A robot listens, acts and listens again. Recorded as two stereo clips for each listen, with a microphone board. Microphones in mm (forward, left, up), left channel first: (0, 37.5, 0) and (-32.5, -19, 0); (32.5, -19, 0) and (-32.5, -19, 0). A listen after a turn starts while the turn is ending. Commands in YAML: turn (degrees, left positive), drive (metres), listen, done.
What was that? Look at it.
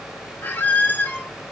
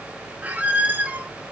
turn: 120
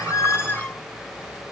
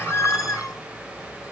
done: "Facing the squeak, under 1 m away."